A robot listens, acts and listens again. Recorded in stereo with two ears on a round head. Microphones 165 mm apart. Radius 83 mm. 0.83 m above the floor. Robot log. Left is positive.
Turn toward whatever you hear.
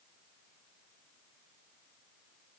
cmd idle
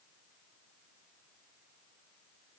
cmd idle
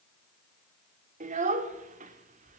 note: The child speaking: about 40° right or 140° right.
cmd yaw -40
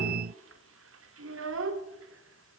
note: So it is at 95° right.
cmd yaw -95
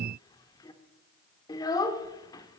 note: The child speaking is now 20° left.
cmd yaw +20
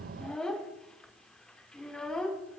end: Found it: a child speaking, straight ahead, 1 to 2 m away.